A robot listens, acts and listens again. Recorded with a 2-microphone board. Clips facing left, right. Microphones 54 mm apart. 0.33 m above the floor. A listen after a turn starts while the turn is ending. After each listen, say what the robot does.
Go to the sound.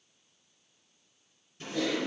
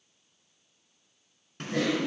Turn 70° right.
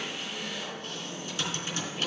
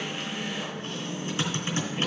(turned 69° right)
Turn 35° right.
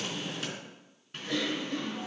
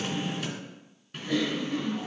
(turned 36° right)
Drive 1.0 m forward.
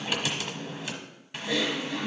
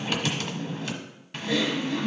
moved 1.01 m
Drive 1.0 m forward.
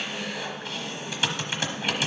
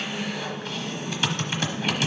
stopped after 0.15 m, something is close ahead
Turn 10° left.
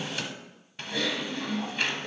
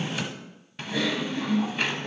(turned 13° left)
I am next to the typing on a keyboard.